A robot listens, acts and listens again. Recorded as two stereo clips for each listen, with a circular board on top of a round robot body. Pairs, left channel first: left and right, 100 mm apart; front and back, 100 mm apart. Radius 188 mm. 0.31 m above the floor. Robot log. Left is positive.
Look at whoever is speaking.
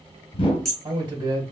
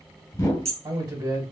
note: The man speaking: 130° right.
cmd yaw -130
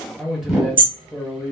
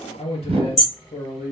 end: Facing the man speaking, 1 to 2 m away.